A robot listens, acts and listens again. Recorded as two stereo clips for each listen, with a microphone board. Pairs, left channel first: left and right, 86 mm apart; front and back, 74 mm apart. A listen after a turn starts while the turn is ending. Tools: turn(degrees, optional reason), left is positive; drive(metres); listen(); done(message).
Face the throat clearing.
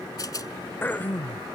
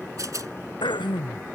turn(degrees=20, reason="The throat clearing: 20° left.")
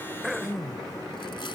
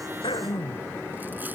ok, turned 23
done("Facing the throat clearing.")